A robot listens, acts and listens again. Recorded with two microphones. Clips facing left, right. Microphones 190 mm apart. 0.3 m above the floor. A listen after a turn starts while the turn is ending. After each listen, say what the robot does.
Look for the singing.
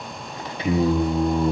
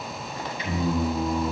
Turn 65° left.
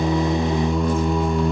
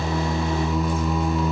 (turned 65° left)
Turn 50° left.
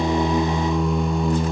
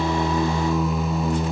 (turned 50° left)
Facing the singing.